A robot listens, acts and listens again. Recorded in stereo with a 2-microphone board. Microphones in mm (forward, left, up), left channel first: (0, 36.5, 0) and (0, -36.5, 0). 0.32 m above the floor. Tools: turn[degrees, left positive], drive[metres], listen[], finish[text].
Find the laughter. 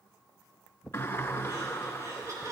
Thought: The laughter: about 45° right or 135° right.
Action: turn[-45]
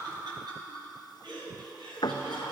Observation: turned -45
Thought: So it is at 80° right.
Action: turn[-80]
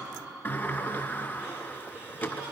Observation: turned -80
Thought: The laughter is now 15° right.
Action: turn[-15]
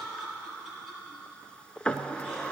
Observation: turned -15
Action: finish[Facing the laughter, over 4 m away.]